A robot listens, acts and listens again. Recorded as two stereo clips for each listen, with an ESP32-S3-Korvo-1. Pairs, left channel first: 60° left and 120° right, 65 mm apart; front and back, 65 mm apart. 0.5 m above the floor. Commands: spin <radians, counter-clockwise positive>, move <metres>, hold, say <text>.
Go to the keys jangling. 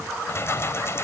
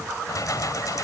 spin 0.26
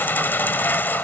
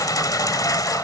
move 1.0
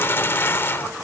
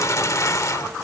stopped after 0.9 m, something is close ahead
spin 0.26
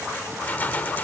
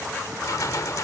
say I am next to the keys jangling.